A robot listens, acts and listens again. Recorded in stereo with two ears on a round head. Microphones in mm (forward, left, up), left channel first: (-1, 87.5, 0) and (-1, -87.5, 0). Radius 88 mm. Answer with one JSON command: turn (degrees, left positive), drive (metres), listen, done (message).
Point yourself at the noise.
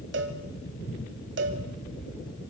{"turn": -60}
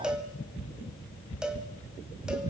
{"done": "Facing the cowbell, 2 to 4 m away."}